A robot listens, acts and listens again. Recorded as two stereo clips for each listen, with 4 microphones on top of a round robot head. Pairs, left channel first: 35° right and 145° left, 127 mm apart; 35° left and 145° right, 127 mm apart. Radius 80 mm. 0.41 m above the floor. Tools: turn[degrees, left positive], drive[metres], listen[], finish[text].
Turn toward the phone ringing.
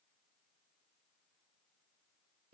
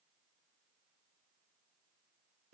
Action: listen[]
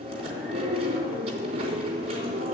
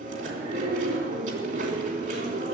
Action: listen[]
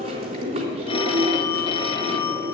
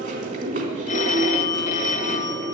Thought: The phone ringing: 10° left.
Action: turn[10]
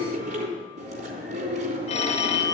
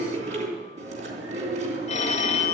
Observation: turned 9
Action: finish[Found it: a phone ringing, straight ahead.]